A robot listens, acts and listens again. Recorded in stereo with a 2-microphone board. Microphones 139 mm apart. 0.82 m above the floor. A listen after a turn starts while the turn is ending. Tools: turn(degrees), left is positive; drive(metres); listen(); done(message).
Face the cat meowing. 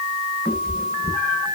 turn(degrees=30)
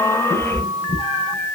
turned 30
turn(degrees=135)
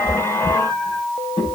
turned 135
turn(degrees=35)
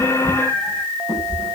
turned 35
turn(degrees=10)
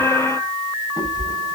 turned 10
done("Facing the cat meowing.")